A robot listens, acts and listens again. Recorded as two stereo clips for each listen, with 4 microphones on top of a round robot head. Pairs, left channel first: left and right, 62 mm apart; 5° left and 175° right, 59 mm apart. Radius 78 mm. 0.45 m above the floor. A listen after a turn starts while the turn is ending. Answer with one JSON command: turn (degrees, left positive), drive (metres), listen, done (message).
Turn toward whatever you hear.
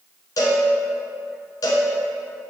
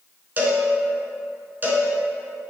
{"turn": 130}
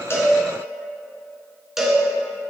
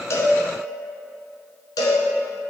{"done": "Found it: a cowbell, straight ahead, 1 to 2 m away."}